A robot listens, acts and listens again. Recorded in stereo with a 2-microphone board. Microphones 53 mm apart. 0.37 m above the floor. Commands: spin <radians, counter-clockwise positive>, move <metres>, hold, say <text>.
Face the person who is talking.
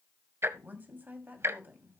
spin -0.61
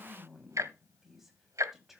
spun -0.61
say Facing the woman speaking.